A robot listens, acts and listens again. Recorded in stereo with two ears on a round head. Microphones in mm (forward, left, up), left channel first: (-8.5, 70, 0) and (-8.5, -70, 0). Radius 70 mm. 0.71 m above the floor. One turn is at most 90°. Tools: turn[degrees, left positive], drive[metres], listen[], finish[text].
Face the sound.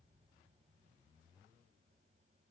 Action: listen[]
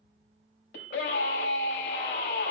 Action: turn[90]
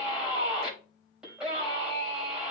Action: finish[Facing the scream.]